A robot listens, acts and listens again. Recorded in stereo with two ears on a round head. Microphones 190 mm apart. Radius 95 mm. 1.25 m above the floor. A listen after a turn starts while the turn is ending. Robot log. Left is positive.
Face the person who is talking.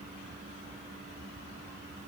cmd idle
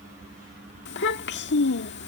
note: The child speaking: about 55° left or 125° left.
cmd yaw +55
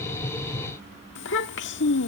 note: So it is at 65° left.
cmd yaw +65
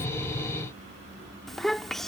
end: Facing the child speaking.